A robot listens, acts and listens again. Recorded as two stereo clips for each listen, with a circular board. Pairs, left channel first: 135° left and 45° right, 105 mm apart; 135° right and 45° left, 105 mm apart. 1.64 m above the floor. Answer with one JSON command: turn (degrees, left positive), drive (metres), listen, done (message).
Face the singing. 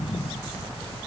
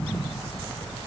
{"listen": true}
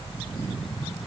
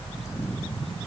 {"listen": true}
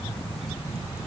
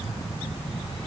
{"done": "I can't make out singing to turn to."}